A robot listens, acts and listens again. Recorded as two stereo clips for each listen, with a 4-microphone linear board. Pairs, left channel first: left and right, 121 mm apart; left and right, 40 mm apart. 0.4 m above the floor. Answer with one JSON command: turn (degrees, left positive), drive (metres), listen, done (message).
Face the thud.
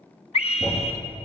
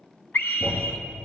{"turn": 30}
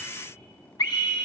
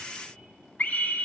{"listen": true}
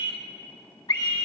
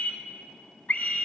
{"done": "I heard a thud, but can't make it out now. It was about 25° right or 145° left."}